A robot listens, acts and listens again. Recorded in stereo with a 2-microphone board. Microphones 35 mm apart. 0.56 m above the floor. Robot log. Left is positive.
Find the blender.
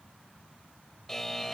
cmd idle
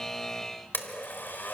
note: The blender: about 75° left or 105° left.
cmd yaw +75
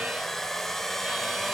note: So it is at 10° left.
cmd yaw +10
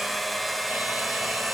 end: Found it: a blender, straight ahead, 1 to 2 m away.